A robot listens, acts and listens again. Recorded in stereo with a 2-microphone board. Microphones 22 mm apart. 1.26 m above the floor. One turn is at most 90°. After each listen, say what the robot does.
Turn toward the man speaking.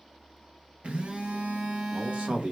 Turn 70° right.
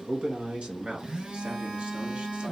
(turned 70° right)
Turn 70° right.
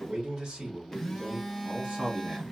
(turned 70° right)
Turn 45° right.
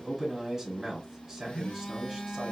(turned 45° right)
Facing the man speaking.